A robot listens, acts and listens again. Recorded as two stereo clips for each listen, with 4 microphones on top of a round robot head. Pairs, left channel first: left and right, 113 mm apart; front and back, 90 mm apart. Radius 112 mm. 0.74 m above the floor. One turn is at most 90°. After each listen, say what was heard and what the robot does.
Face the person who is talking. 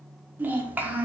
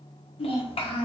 The child speaking: 15° right. Turn 15° right.
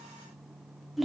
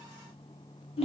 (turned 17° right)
Found it: a child speaking, straight ahead.